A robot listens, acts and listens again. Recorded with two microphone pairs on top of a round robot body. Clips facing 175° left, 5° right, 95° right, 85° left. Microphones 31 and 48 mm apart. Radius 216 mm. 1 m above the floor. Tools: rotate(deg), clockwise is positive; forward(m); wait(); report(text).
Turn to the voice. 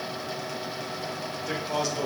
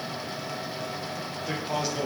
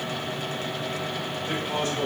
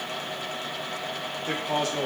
rotate(-75)
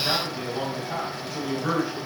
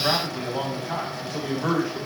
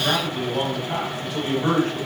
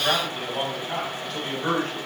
rotate(15)
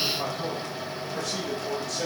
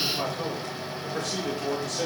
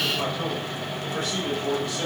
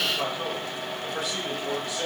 rotate(10)
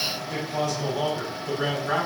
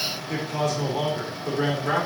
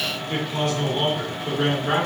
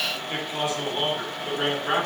report("Facing the man speaking, 2 to 4 m away.")